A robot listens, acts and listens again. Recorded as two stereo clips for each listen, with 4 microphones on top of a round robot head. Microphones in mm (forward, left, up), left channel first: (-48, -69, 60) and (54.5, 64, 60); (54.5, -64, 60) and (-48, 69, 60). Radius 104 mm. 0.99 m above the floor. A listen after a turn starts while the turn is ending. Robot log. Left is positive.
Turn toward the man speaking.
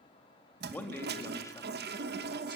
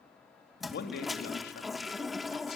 note: The man speaking: 60° right.
cmd yaw -60
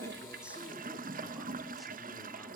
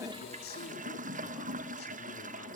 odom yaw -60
cmd idle
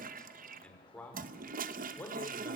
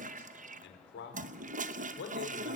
note: The man speaking is now 50° right.
cmd yaw -50
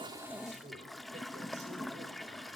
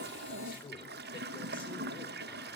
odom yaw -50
cmd idle
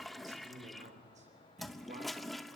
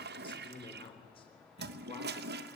end: Found it: a man speaking, straight ahead.